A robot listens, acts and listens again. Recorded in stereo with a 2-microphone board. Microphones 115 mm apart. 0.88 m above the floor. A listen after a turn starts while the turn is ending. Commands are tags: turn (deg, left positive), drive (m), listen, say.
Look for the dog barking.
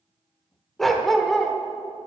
<turn deg="30"/>
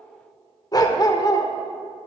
<turn deg="145"/>
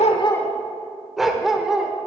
<say>Found it: a dog barking, straight ahead.</say>